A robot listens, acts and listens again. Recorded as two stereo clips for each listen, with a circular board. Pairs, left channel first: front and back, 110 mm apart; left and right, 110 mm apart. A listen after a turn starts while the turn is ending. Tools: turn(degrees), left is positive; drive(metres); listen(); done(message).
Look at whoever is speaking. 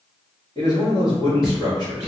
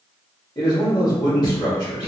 turn(degrees=45)
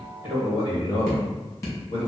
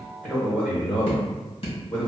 turn(degrees=15)
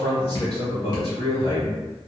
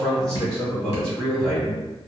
done("Found it: a man speaking, straight ahead.")